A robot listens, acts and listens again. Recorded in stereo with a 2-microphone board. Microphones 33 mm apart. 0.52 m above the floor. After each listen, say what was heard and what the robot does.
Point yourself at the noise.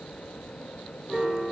Turn 30° left.
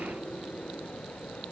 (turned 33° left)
Keep listening.
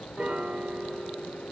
So it is at 35° right. Turn 35° right.
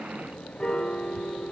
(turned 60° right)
The piano is now 25° left. Turn 25° left.
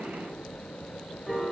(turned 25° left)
Found it: a piano, straight ahead.